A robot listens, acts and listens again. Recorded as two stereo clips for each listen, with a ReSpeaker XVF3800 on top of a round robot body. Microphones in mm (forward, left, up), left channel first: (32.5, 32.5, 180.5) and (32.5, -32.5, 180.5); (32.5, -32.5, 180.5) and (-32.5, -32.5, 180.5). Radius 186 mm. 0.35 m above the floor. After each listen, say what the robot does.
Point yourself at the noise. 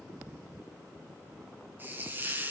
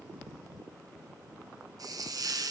Turn 150° right.
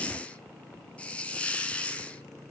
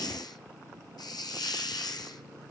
Turn 20° left.
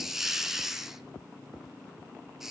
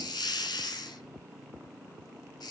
Facing the hiss.